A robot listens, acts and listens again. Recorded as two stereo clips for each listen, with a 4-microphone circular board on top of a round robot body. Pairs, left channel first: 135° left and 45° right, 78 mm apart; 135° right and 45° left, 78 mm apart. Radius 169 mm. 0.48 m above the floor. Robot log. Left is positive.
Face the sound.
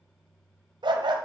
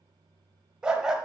note: The dog barking: 40° right.
cmd yaw -40
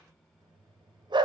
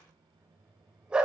note: The dog barking is now 35° right.
cmd yaw -35
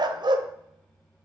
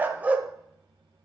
note: The dog barking is now 30° right.
cmd yaw -30
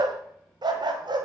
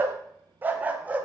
note: The dog barking is now 25° right.
cmd yaw -25
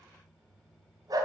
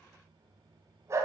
note: The dog barking is now 10° right.
cmd yaw -10
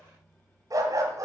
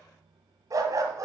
end: Found it: a dog barking, straight ahead, 1 to 2 m away.